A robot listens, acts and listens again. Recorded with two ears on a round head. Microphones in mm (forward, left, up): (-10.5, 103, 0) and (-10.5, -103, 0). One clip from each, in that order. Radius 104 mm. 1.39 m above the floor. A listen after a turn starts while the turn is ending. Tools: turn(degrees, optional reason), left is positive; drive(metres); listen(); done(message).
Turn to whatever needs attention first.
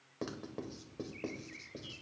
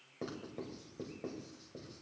listen()
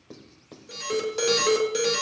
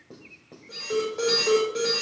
turn(degrees=90)
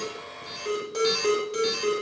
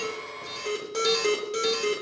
done("Facing the alarm.")